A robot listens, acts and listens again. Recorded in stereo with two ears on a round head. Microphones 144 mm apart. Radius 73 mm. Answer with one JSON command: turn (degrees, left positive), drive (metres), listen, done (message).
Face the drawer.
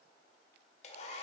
{"listen": true}
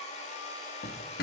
{"turn": 60}
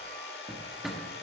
{"done": "Found it: a drawer, straight ahead."}